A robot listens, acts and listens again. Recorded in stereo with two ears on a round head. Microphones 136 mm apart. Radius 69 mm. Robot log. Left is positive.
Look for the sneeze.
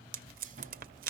cmd idle
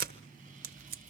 cmd idle
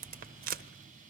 end: I can't make out a sneeze to turn to.